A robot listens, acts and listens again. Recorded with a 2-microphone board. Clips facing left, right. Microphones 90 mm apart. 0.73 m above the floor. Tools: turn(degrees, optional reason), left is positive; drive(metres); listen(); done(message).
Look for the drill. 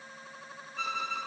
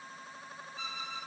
listen()
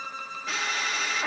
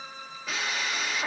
turn(degrees=30)
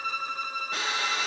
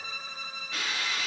turn(degrees=150, reason="So it is at 150° left.")
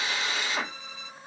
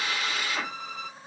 turn(degrees=25, reason="The drill is now 25° left.")
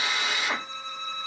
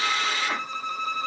turn(degrees=15, reason="The drill is now 15° left.")
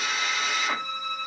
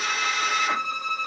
listen()
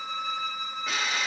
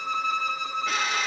done("Facing the drill.")